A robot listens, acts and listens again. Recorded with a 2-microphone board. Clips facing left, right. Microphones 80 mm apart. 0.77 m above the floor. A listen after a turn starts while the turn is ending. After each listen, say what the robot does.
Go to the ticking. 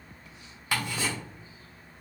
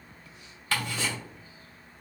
Turn 30° left.
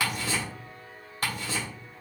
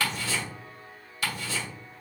Turn 135° left.
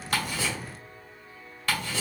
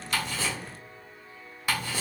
Turn 15° right.
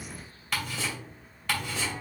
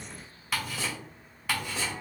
Drive 1.0 m forward.
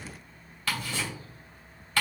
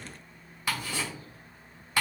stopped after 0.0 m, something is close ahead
Turn 15° right.
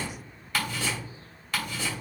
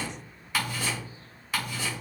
Something is in my way. I am facing the ticking but have not reached it.